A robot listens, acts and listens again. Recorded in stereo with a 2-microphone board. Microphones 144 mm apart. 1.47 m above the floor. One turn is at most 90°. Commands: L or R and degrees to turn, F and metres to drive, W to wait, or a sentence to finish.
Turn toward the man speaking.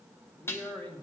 L30
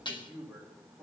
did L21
R10
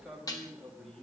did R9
Found it: a man speaking, straight ahead.